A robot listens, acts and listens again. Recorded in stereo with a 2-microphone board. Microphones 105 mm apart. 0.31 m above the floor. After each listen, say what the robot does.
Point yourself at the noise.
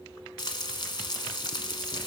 Turn 45° left.
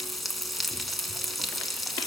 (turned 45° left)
Found it: frying, straight ahead, 1 to 2 m away.